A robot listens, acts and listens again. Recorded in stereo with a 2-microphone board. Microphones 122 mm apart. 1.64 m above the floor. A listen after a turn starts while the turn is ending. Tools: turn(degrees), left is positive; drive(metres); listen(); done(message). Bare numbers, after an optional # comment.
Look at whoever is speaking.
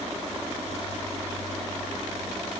listen()
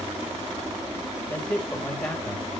turn(30)
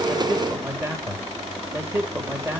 # So it is at 20° right.
turn(-20)
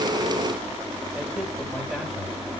done("Found it: a man speaking, straight ahead.")